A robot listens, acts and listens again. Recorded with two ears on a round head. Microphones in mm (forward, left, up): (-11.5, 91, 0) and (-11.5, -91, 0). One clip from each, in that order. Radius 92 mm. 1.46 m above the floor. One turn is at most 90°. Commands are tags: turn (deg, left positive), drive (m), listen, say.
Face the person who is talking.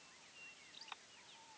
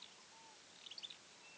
<listen/>
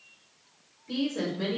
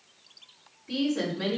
<turn deg="30"/>
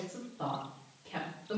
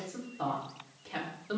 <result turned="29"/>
<turn deg="-20"/>
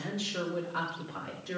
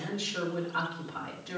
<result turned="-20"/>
<turn deg="10"/>
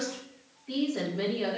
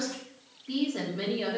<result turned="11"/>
<say>Found it: a woman speaking, straight ahead, 2 to 4 m away.</say>